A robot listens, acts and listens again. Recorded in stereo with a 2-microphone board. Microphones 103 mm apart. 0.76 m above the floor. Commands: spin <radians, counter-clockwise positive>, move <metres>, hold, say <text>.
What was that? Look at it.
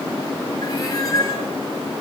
spin 0.61
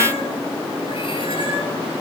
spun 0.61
hold
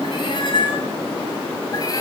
spin 0.61
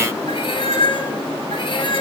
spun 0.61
spin 2.18
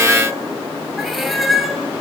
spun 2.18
say Facing the cat meowing.